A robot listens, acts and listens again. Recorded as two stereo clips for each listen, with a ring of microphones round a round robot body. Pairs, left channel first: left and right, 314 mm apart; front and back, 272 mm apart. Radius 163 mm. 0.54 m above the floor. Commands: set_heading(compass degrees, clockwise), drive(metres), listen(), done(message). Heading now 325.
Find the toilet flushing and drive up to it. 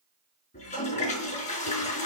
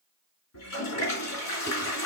set_heading(305)
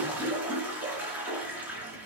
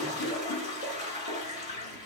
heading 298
drive(1.0)
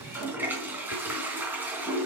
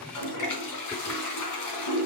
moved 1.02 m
drive(1.0)
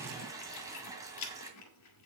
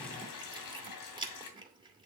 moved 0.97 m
set_heading(308)
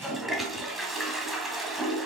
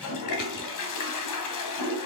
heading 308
drive(1.0)
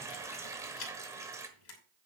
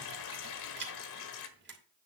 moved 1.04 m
set_heading(318)
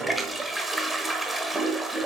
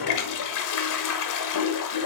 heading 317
drive(1.0)
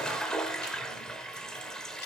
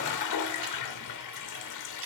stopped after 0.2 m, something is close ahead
done("I am next to the toilet flushing.")